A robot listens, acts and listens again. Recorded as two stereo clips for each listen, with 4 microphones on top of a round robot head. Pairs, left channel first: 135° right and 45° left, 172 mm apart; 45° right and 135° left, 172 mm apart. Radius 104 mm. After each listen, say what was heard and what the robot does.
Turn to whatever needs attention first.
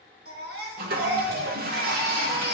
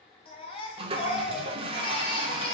The baby crying: 15° left. Turn 15° left.
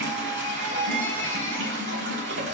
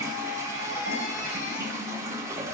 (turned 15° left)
Found it: a baby crying, straight ahead.